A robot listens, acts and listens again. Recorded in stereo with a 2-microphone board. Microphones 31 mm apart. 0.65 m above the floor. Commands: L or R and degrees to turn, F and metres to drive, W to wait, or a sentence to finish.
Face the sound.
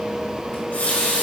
L65
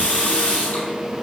L50
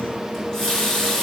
L10
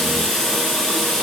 Found it: a running tap, straight ahead.